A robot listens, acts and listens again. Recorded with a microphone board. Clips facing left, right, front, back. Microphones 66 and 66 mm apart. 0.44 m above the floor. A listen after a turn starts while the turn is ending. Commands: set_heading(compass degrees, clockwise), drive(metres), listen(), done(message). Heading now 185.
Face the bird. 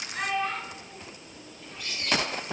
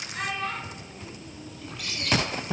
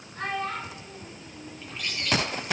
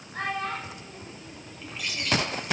set_heading(280)
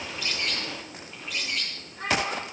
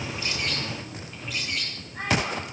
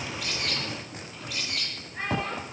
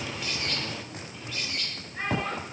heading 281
done("Facing the bird, 2 to 4 m away.")